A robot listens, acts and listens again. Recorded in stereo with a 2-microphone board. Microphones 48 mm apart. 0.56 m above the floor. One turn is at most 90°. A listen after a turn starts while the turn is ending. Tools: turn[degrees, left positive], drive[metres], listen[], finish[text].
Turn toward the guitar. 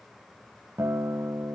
Thought: The guitar: about 75° right or 105° right.
Action: turn[-75]
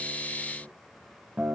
Thought: So it is at 30° right.
Action: turn[-30]
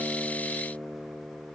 Action: finish[Facing the guitar, 1 to 2 m away.]